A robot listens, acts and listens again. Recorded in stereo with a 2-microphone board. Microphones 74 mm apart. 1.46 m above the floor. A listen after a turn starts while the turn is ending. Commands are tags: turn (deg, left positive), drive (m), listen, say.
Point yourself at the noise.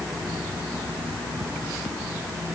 <listen/>
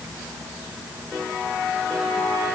<listen/>
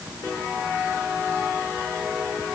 <say>I can't make out anything to turn to.</say>